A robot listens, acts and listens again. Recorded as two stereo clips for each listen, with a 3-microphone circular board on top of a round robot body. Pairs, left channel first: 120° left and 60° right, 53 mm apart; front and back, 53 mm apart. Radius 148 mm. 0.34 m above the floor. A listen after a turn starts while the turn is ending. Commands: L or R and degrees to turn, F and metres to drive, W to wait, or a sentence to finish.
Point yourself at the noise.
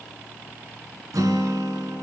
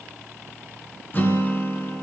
R55
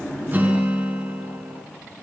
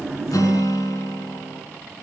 Found it: a guitar, straight ahead.